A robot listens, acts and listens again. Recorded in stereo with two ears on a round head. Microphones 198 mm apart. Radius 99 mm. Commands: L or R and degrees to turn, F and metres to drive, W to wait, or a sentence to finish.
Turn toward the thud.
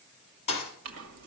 L30
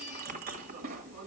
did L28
W
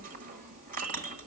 I heard a thud, but can't make it out now. It was about straight ahead or 120° left.